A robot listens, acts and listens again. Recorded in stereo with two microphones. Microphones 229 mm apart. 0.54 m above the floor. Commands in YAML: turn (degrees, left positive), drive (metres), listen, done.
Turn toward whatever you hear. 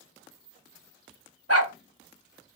turn: -90
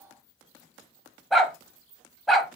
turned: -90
done: "Found it: a dog barking, straight ahead."